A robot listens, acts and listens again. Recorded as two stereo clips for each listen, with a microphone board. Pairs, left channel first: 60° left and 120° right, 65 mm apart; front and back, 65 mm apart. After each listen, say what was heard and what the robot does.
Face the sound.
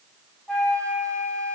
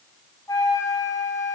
The flute: 15° right. Turn 15° right.
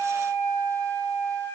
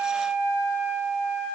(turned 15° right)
Found it: a flute, straight ahead.